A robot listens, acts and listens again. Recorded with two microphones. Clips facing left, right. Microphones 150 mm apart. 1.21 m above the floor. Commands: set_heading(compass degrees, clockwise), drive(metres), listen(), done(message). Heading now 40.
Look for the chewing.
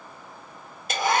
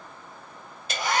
listen()
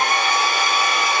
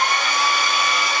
listen()
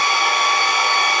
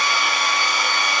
done("I can't make out chewing, only a hair dryer.")